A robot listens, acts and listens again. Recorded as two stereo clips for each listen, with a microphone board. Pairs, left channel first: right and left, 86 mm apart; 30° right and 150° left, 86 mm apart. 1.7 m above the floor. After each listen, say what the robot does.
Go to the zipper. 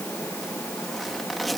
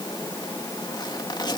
Drive 1.0 m forward.
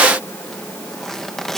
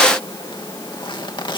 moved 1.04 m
Drive 1.0 m forward.
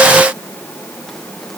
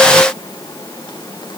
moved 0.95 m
Keep listening.
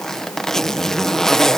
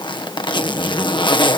Drive 1.0 m forward.
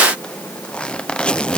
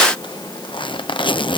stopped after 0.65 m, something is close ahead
Turn 10° right.
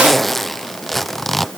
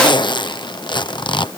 I am next to the zipper.